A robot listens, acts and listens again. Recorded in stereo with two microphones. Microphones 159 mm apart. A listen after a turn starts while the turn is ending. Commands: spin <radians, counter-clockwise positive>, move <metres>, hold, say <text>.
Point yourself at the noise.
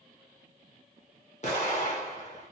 spin 0.79
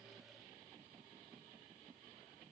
hold
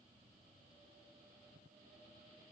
say I heard an explosion, but can't make it out now. It was about straight ahead or 90° left.